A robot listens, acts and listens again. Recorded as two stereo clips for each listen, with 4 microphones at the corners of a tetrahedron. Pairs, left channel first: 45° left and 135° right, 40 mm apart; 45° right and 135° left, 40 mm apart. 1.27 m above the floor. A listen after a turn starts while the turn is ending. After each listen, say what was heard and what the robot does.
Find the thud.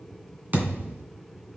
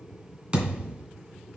The thud: 165° right. Turn 165° right.
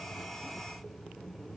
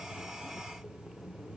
Facing where the thud came from. I can't hear it now.